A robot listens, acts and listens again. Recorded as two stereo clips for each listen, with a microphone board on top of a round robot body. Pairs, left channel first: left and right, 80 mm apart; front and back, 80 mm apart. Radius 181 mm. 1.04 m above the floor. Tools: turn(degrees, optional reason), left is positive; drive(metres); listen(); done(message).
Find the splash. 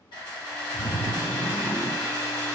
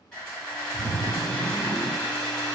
turn(degrees=-10, reason="The splash: 10° right.")
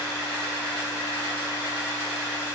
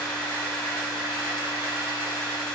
done("Facing where the splash came from. I can't hear it now.")